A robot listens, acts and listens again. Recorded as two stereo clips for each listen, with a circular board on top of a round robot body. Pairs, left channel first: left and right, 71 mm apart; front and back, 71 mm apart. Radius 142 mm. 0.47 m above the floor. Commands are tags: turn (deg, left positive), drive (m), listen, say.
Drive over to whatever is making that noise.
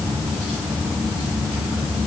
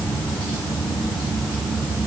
<listen/>
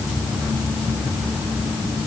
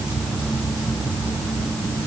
<listen/>
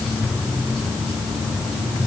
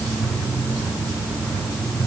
<say>I can't make out anything to turn to.</say>